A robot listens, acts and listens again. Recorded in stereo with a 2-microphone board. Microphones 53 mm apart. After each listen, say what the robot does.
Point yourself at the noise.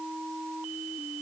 Keep listening.
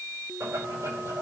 Turn 90° right.
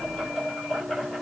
Found it: boiling, straight ahead, over 4 m away.